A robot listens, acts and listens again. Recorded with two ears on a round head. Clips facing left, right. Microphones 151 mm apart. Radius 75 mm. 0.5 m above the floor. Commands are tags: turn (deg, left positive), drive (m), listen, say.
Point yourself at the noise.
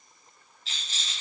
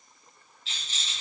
<turn deg="35"/>
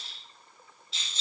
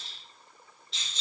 <say>Facing the rattle, 2 to 4 m away.</say>